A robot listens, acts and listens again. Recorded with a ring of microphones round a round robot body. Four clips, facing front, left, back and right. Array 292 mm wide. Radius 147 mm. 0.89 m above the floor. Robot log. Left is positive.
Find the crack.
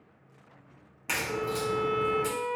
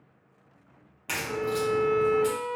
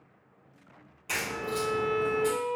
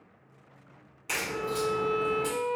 note: The crack: 30° left.
cmd yaw +30
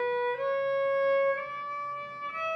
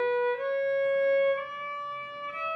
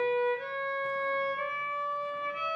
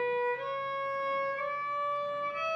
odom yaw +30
end: I heard a crack from this way, but can't make it out now.